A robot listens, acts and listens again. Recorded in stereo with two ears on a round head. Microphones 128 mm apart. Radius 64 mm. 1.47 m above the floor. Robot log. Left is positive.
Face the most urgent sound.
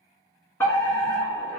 note: The fire alarm: about 15° left or 165° left.
cmd yaw +15
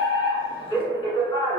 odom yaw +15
note: So it is at 150° left.
cmd yaw +150
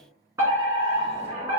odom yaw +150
note: The fire alarm is now 25° right.
cmd yaw -25
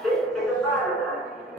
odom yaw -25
end: Facing the fire alarm, 1 to 2 m away.